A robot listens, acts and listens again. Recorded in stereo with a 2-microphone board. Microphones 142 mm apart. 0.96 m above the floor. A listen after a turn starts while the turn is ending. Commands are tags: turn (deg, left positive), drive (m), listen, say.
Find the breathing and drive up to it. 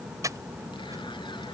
<turn deg="-25"/>
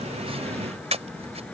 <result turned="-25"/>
<turn deg="-130"/>
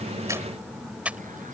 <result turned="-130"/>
<turn deg="-10"/>
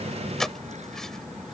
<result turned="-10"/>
<drive m="1.0"/>
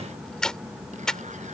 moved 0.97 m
<drive m="1.0"/>
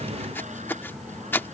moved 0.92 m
<turn deg="15"/>
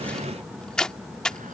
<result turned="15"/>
<drive m="1.0"/>
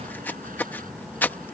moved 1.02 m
<turn deg="15"/>
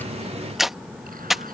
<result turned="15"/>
<drive m="1.0"/>
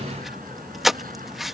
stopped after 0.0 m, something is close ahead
<say>Arrived at the breathing, straight ahead.</say>